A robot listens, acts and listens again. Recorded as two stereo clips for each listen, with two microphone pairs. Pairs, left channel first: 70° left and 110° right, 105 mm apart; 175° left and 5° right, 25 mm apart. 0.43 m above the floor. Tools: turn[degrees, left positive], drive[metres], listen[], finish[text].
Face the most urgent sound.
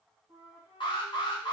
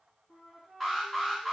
Thought: The alarm: 90° left.
Action: turn[90]
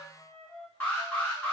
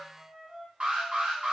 Action: finish[Found it: an alarm, straight ahead, 1 to 2 m away.]